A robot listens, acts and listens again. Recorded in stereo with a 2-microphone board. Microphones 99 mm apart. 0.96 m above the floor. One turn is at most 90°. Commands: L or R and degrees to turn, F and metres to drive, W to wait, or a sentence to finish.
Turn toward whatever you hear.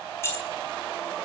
L25
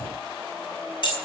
L90
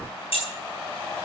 L65
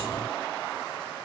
W
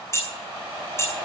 L25
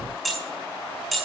Found it: keys jangling, straight ahead, over 4 m away.